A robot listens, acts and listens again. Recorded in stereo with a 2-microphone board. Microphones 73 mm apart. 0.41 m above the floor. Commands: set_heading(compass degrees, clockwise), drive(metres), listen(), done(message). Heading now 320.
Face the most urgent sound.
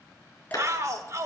set_heading(5)
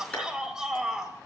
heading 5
set_heading(15)
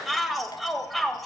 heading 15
done("Found it: a shout, straight ahead, 1 to 2 m away.")